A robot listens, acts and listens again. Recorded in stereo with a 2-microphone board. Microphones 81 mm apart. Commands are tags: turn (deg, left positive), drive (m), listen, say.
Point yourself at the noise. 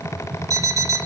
<turn deg="-45"/>
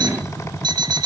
<turn deg="-90"/>
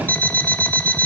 <turn deg="25"/>
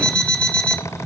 <turn deg="15"/>
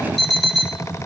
<say>Found it: an alarm clock, straight ahead, 1 to 2 m away.</say>